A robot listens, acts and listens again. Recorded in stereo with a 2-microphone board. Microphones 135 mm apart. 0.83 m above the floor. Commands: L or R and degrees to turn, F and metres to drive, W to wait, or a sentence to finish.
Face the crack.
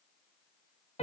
W
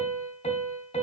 W
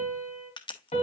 L35
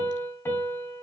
W
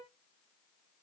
I heard a crack, but can't make it out now. It was about straight ahead or 110° left.